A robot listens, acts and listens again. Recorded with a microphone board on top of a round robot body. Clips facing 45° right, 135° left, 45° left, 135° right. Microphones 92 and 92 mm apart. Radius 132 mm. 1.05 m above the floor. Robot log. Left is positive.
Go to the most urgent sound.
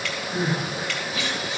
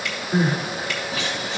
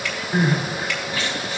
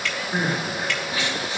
note: The crying: 150° left.
cmd yaw +150
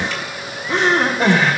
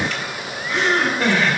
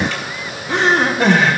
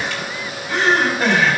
note: The crying is now 10° left.
cmd yaw +10
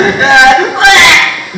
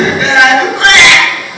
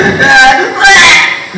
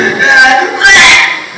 cmd fwd 1.0
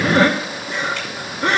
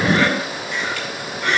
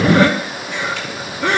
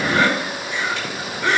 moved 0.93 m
note: The crying is now 10° left.
cmd yaw +10
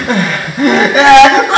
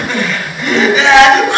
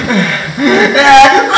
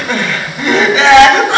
cmd fwd 1.0
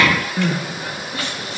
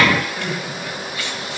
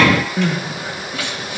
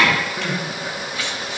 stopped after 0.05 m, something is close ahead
end: Arrived at the crying, straight ahead.